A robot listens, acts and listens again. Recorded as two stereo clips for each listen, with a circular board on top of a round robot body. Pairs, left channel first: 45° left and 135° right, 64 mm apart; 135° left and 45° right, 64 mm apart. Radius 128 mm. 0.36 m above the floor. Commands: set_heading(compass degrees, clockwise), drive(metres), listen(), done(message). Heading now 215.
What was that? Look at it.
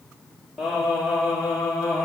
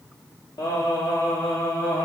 set_heading(75)
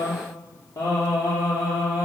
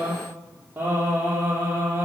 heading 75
set_heading(55)
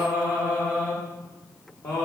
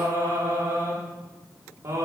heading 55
done("Found it: singing, straight ahead, over 4 m away.")